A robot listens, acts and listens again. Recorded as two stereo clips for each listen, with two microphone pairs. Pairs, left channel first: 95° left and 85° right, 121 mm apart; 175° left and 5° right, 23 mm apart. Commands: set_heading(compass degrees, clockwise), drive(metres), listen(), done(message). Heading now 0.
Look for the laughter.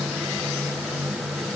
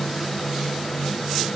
listen()
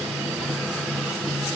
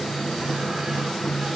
listen()
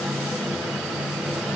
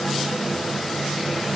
done("I can't make out laughter.")